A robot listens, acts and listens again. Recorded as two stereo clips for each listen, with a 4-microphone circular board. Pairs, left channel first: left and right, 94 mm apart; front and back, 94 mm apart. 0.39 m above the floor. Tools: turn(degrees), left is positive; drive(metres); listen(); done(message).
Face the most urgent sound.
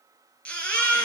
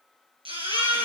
turn(degrees=165)
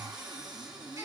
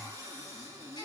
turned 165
listen()
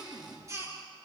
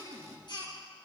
turn(degrees=-35)
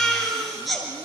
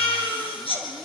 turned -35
done("Facing the baby crying.")